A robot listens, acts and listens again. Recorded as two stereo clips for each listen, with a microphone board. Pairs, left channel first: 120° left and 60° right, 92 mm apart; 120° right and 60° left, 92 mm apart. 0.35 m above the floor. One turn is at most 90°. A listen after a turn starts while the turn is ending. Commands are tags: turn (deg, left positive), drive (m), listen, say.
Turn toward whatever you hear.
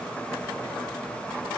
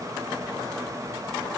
<listen/>
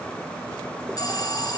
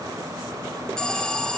<turn deg="90"/>
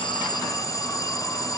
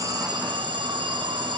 <turn deg="75"/>
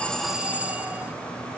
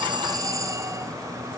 <turn deg="15"/>
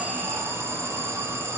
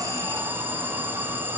<say>Found it: an alarm, straight ahead, 2 to 4 m away.</say>